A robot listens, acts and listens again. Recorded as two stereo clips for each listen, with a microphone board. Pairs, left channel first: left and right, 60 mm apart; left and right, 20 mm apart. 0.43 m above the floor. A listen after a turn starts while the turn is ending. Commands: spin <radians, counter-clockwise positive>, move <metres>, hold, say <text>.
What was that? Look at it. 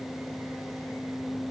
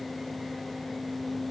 hold
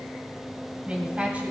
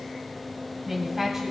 spin -0.44
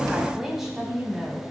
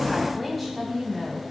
spin -0.52
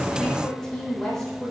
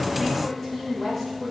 spin 0.17
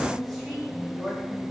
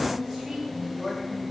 say Facing the woman speaking.